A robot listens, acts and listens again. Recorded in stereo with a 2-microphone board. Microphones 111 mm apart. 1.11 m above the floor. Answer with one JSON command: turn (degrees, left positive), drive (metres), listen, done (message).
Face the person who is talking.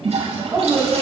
{"turn": -20}
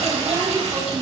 {"turn": -145}
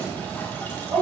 {"turn": -35}
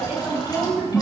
{"turn": -15}
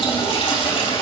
{"listen": true}
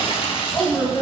{"done": "Facing the woman speaking, over 4 m away."}